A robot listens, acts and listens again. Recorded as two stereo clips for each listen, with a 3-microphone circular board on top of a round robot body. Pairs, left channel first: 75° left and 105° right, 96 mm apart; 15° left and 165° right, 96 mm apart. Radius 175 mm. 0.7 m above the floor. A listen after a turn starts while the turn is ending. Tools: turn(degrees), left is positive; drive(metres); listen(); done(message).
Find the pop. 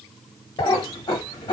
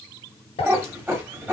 turn(degrees=30)
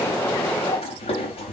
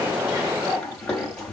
done("I heard a pop from this way, but can't make it out now.")